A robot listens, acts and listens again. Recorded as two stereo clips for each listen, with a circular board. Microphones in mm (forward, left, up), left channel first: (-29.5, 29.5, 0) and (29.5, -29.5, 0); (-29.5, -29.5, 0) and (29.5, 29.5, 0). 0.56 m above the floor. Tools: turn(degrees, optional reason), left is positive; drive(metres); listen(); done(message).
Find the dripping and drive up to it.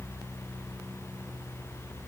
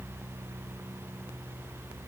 listen()
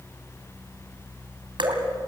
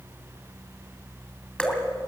turn(degrees=-55, reason="The dripping: 55° right.")
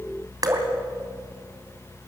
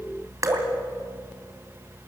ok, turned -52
drive(metres=1.0)
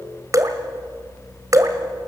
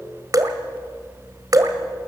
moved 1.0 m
drive(metres=1.0)
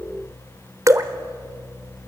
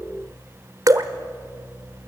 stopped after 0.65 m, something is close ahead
done("I am next to the dripping.")